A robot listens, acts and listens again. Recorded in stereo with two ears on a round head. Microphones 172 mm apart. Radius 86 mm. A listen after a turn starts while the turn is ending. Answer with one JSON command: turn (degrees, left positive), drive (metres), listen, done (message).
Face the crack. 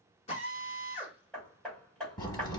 {"turn": 20}
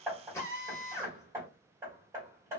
{"listen": true}
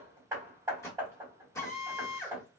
{"done": "I heard a crack, but can't make it out now. It was about straight ahead or 140° left."}